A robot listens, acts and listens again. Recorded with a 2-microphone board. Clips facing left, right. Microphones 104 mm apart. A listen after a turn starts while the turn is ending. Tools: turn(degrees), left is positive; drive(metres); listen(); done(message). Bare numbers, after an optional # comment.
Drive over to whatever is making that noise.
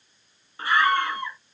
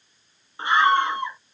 # The scream: about 20° right or 160° right.
turn(-20)
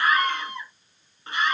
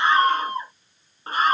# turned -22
# So it is at 140° right.
turn(-140)
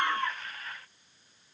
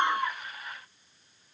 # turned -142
listen()
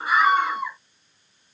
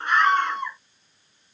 drive(1.0)
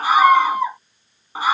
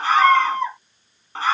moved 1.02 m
# The scream is now 10° left.
turn(10)
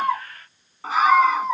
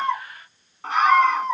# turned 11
drive(1.0)
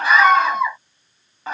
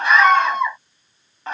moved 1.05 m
drive(1.0)
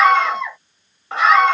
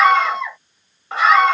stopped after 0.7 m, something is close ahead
done("I am next to the scream.")